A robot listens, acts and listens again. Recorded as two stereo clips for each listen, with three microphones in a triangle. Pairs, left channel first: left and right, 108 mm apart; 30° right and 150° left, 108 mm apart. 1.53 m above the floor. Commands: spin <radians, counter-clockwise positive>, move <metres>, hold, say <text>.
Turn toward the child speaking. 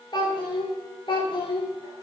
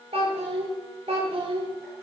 spin 2.18
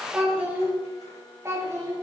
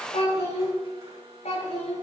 spin -0.52
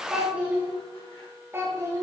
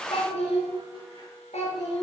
spin -0.44
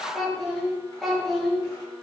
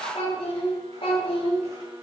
say Found it: a child speaking, straight ahead.